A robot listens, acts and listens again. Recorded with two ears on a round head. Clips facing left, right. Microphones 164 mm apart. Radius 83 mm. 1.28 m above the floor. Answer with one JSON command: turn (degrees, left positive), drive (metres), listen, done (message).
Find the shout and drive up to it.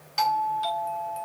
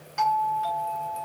{"listen": true}
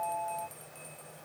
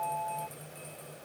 {"listen": true}
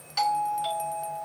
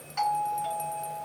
{"done": "I can't make out a shout, only a doorbell."}